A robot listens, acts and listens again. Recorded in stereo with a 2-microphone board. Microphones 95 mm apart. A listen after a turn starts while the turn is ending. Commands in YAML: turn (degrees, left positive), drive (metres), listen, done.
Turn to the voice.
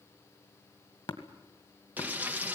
listen: true
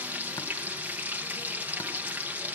listen: true
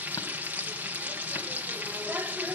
done: "I can't make out anyone speaking, only tapping and frying."